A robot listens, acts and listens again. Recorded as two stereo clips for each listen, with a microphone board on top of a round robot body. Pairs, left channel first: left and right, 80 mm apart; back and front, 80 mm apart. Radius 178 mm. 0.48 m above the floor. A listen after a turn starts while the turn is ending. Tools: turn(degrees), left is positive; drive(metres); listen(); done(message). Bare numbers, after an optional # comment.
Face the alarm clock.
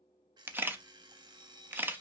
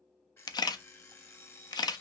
# The alarm clock: 120° right.
turn(-120)
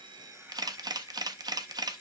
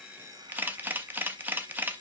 # The alarm clock is now 35° right.
turn(-35)
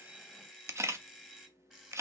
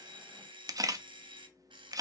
# The alarm clock is now 10° right.
turn(-10)
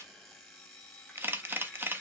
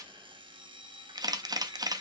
done("Facing the alarm clock, 1 to 2 m away.")